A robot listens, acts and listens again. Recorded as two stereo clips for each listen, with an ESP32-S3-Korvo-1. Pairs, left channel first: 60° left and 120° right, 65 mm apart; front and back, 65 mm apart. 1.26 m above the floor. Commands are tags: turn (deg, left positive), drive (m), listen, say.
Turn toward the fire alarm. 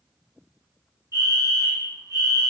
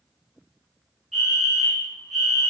<turn deg="-90"/>
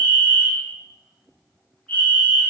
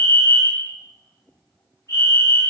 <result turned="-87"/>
<say>Facing the fire alarm.</say>